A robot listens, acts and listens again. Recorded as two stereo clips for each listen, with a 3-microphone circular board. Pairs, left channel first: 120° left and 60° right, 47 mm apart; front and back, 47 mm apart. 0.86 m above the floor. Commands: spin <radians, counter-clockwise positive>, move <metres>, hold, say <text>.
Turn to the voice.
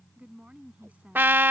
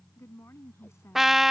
say Found it: a woman speaking, straight ahead.